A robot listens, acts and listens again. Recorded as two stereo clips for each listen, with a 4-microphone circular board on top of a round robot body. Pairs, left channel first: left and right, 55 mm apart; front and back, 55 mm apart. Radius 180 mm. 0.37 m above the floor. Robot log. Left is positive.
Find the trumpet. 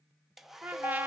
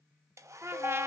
note: The trumpet: 145° right.
cmd yaw -145
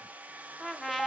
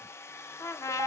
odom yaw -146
end: Found it: a trumpet, straight ahead, under 1 m away.